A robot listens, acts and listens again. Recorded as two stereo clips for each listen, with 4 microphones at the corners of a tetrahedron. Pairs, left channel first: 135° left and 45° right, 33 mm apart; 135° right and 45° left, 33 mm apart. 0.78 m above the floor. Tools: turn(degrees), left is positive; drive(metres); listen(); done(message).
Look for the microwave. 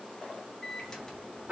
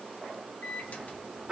turn(degrees=-155)
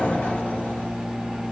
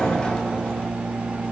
turn(degrees=20)
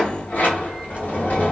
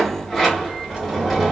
listen()
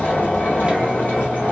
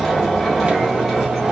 listen()
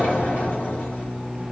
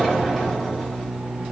done("Found it: a microwave, straight ahead.")